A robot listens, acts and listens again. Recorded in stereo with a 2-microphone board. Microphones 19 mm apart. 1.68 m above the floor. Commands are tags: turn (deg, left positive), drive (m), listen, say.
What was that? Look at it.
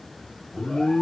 <turn deg="60"/>
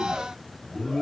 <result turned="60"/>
<turn deg="45"/>
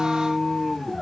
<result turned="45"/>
<turn deg="25"/>
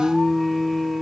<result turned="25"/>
<say>Facing the alarm, 1 to 2 m away.</say>